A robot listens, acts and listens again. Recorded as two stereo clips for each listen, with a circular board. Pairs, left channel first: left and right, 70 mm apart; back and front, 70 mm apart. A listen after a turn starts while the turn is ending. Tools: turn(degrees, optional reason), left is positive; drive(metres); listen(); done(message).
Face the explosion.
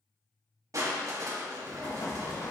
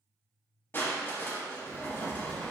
turn(degrees=115, reason="The explosion: 115° left.")
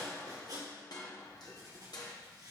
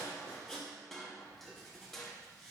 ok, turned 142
turn(degrees=-25, reason="Nothing new. It was at 25° right.")
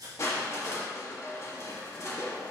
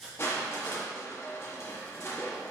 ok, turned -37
turn(degrees=10, reason="Nothing new. It was at 10° left.")
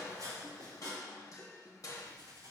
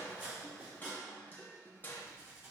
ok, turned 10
done("Facing where the explosion came from. I can't hear it now.")